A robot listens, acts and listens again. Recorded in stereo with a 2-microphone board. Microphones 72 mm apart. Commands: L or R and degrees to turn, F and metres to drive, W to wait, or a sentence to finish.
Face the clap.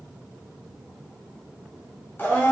W
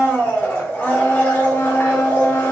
W
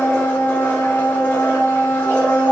I can't make out a clap to turn to.